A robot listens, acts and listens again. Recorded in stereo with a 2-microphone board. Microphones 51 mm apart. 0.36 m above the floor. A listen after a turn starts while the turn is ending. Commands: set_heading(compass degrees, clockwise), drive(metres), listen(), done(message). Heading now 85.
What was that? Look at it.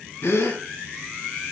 set_heading(355)
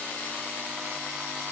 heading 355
done("Facing where the gasp came from. I can't hear it now.")